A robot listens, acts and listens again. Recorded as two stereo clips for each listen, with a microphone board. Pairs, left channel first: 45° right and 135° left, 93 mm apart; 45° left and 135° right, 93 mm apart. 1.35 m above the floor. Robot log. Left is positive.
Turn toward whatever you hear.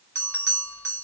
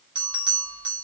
note: The bell: 105° right.
cmd yaw -105
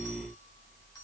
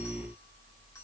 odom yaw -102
cmd idle
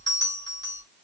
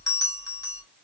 end: Found it: a bell, straight ahead.